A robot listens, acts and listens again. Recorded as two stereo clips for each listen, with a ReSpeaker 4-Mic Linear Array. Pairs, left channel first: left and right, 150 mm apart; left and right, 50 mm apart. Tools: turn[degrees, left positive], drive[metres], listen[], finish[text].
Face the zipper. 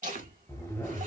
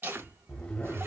Thought: The zipper: about 20° left or 160° left.
Action: turn[20]
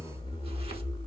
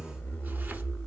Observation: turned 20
Thought: So it is at 140° left.
Action: turn[140]
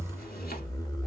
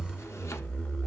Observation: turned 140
Thought: The zipper is now 30° left.
Action: turn[30]
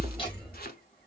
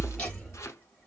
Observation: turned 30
Action: finish[Facing the zipper.]